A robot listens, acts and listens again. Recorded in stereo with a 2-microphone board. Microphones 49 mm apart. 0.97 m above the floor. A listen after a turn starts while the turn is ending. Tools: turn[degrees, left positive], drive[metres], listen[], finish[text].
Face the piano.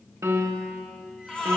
Action: turn[-90]
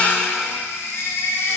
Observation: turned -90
Action: listen[]
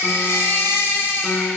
Action: listen[]
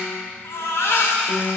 Action: finish[Found it: a piano, straight ahead.]